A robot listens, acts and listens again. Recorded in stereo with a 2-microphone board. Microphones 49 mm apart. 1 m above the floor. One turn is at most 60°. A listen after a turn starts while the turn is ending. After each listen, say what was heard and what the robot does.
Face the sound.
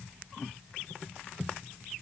Keep listening.
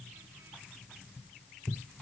Keep listening.
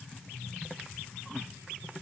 I can't make out anything to turn to.